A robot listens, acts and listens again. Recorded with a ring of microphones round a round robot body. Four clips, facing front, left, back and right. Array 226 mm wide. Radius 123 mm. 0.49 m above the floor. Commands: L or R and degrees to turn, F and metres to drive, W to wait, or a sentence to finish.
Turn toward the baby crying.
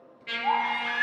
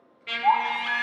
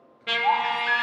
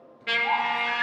L125
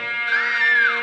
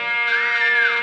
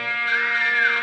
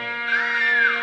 W
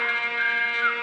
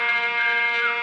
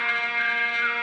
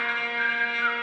W
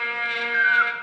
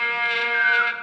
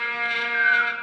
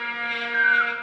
Facing where the baby crying came from. I can't hear it now.